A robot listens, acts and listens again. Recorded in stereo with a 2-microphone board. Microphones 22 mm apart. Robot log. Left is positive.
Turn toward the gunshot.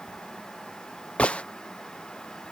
note: The gunshot: about 65° left or 115° left.
cmd yaw +65
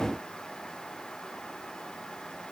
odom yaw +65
cmd idle
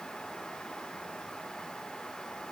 end: I heard a gunshot, but can't make it out now. It was about straight ahead or 50° left.